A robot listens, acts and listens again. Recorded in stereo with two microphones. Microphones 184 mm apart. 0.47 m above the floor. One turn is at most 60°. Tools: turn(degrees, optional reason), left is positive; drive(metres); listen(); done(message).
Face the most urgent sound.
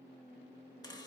listen()
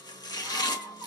turn(degrees=-30)
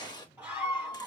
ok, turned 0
turn(degrees=-30)
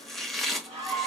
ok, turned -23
turn(degrees=-60, reason="So it is at 150° right.")
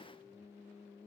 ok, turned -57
turn(degrees=-60, reason="Nothing new. It was at 90° right.")
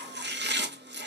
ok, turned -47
turn(degrees=-45, reason="Nothing new. It was at 45° right.")
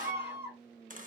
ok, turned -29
turn(degrees=-15, reason="The scream is now 15° right.")
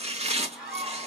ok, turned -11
done("Facing the scream, 2 to 4 m away.")